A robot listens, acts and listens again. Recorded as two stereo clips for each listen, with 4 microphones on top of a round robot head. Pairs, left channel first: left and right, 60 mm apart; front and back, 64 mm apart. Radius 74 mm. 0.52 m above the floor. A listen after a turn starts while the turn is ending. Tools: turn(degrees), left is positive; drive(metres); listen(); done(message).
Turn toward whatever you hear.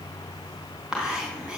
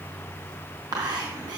turn(degrees=-165)
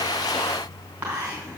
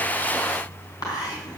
turn(degrees=-25)
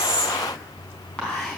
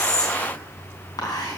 turn(degrees=10)
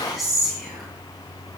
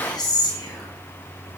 done("Facing the whispering, over 4 m away.")